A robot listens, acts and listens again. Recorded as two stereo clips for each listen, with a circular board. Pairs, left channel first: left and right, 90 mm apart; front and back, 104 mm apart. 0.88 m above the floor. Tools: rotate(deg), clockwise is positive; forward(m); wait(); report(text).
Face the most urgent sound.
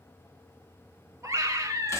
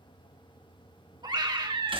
rotate(140)
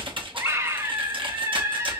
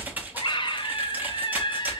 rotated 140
rotate(30)
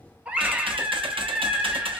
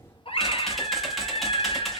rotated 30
rotate(15)
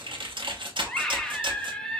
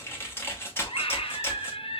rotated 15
rotate(-10)
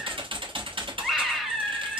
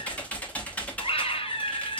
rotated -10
report("Facing the scream, under 1 m away.")